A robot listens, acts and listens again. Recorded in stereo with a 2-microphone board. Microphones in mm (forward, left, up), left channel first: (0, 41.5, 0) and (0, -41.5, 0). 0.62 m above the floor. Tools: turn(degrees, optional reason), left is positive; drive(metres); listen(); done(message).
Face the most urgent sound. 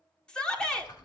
turn(degrees=30)
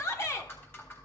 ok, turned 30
turn(degrees=135, reason="So it is at 135° left.")
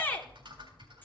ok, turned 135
turn(degrees=25, reason="The shout is now 25° left.")
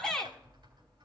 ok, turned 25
turn(degrees=10, reason="The shout is now 10° left.")
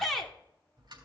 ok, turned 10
done("Found it: a shout, straight ahead.")